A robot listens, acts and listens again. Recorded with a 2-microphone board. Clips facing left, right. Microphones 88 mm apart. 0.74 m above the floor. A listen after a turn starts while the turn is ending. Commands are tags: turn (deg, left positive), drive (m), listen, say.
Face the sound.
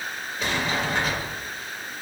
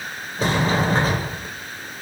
<turn deg="-35"/>
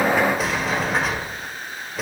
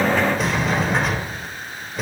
<say>Found it: a sliding door, straight ahead.</say>